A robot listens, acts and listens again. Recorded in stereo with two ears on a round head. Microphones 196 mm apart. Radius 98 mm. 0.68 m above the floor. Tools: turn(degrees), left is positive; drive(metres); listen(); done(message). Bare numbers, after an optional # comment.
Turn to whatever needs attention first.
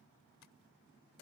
listen()
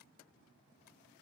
listen()
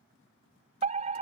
# The fire alarm: about 35° right or 145° right.
turn(-35)
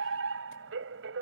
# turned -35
# So it is at 110° right.
turn(-110)
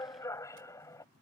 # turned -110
# The fire alarm is now 15° left.
turn(15)
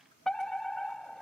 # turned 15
done("Found it: a fire alarm, straight ahead.")